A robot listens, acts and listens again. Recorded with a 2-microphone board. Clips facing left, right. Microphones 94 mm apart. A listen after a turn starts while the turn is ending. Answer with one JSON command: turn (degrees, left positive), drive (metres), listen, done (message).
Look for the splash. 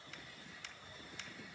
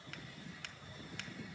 {"listen": true}
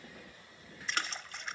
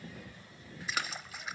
{"turn": -30}
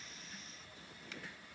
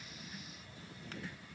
{"listen": true}
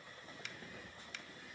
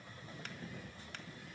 {"done": "I heard a splash, but can't make it out now. It was about 25° left or 145° right."}